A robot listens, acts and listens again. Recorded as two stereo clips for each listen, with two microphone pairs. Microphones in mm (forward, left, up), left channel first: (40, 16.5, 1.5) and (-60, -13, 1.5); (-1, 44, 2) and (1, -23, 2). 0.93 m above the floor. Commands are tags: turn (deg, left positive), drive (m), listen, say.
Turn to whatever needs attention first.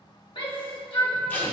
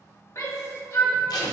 <turn deg="50"/>
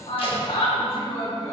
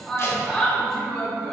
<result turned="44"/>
<say>Found it: a shout, straight ahead.</say>